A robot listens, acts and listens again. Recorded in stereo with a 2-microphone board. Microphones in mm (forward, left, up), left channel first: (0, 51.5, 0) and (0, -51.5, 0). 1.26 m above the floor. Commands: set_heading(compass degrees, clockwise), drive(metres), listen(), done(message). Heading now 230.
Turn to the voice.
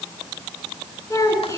set_heading(200)
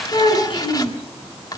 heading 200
set_heading(85)
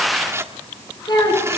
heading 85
set_heading(40)
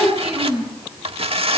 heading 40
set_heading(50)
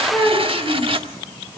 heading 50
done("Found it: a child speaking, straight ahead.")